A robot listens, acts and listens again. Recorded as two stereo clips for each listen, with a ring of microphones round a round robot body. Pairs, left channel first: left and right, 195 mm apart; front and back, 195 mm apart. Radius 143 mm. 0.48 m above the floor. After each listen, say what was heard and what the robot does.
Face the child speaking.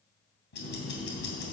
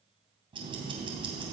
Keep listening.
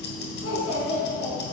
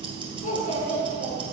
The child speaking: 45° left. Turn 45° left.
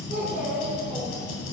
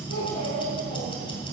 Keep listening.
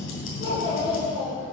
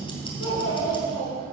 The child speaking is now 20° right. Turn 20° right.
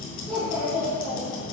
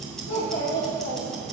Facing the child speaking, over 4 m away.